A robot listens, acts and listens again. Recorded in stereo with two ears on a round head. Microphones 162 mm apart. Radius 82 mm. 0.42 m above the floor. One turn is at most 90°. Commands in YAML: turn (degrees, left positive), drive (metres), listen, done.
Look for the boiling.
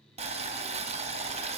turn: -35
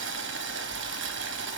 turn: -90
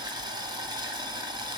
turn: -25
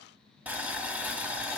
turn: -10
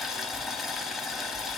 done: "Found it: boiling, straight ahead, under 1 m away."